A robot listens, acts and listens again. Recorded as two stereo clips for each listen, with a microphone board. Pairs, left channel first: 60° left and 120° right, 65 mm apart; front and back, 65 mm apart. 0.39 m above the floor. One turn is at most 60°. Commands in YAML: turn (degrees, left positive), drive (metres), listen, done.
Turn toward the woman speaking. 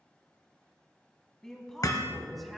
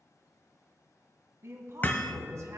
turn: 60
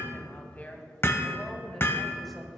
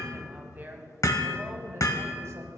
turn: 60
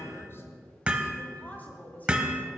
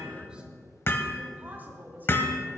turn: 60
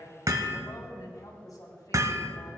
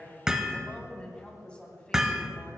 turn: 60
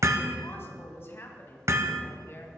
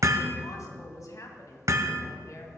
turn: 15
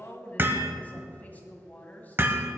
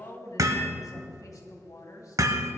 done: "Facing the woman speaking, 2 to 4 m away."